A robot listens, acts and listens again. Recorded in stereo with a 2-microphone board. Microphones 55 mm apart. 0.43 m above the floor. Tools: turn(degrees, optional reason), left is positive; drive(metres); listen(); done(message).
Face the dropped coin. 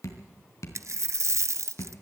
turn(degrees=-60, reason="The dropped coin: about 60° right or 120° right.")
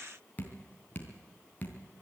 listen()
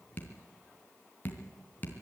done("I heard a dropped coin, but can't make it out now. It was about straight ahead or 60° right.")